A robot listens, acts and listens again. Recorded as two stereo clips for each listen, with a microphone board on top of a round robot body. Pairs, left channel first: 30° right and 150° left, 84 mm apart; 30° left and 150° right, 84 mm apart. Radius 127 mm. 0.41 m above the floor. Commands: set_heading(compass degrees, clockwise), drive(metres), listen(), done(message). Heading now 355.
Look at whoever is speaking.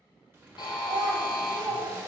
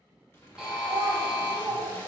set_heading(185)
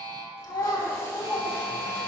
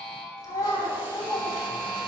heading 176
set_heading(186)
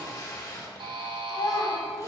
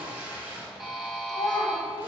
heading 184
done("Found it: a child speaking, straight ahead, 1 to 2 m away.")